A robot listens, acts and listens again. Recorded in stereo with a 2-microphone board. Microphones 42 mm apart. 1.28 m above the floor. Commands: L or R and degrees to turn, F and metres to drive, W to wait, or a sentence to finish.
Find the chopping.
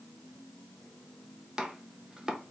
R20
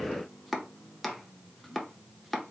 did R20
Found it: chopping, straight ahead, under 1 m away.